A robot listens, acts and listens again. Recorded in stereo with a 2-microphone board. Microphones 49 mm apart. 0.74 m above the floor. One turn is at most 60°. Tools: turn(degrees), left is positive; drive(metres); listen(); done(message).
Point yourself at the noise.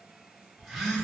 turn(degrees=30)
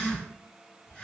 turn(degrees=60)
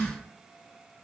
turn(degrees=60)
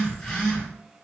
turn(degrees=20)
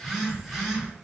done("Found it: a phone buzzing, straight ahead, under 1 m away.")